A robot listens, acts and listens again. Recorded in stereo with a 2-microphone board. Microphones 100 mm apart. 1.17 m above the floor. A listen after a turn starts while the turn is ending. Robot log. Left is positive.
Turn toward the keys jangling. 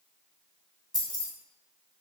note: The keys jangling: about 40° left or 140° left.
cmd yaw +40
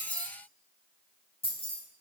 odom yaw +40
note: So it is at 90° left.
cmd yaw +90
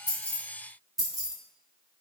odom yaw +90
end: Found it: keys jangling, straight ahead, under 1 m away.